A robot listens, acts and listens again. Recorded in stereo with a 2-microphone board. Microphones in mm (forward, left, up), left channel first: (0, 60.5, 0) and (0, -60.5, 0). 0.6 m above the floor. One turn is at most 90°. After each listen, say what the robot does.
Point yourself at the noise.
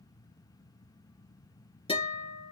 Turn 50° left.
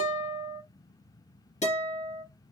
Turn 75° left.
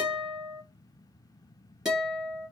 Found it: a guitar, straight ahead, 2 to 4 m away.